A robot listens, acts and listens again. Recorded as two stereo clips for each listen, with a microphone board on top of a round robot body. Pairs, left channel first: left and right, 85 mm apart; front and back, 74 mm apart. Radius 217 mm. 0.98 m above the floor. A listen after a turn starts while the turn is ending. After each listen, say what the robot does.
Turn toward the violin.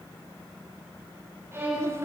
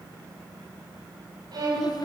Turn 150° right.
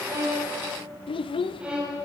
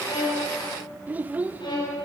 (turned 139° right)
Turn 15° right.
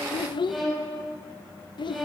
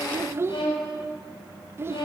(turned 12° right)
Facing the violin, over 4 m away.